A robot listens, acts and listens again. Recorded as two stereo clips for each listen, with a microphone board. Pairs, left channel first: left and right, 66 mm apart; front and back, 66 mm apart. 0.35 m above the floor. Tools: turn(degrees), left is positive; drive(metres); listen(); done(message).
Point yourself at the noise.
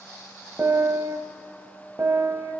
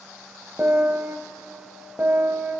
turn(degrees=-125)
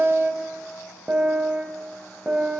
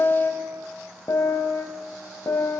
turn(degrees=-30)
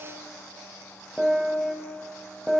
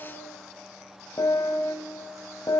done("Found it: a piano, straight ahead, under 1 m away.")